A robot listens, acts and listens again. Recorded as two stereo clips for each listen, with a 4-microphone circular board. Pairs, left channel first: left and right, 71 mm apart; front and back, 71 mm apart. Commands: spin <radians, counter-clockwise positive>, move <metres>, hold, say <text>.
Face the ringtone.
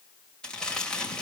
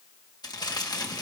hold
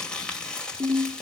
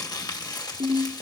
spin -2.71
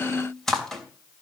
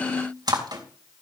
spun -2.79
say Facing the ringtone, over 4 m away.